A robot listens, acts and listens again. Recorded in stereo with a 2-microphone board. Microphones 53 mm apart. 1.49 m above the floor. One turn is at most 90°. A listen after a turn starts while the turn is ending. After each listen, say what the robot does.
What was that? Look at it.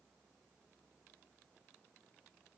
Keep listening.
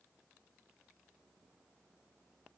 Keep listening.
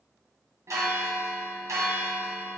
Turn 75° right.
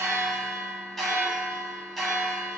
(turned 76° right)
Found it: a bell, straight ahead.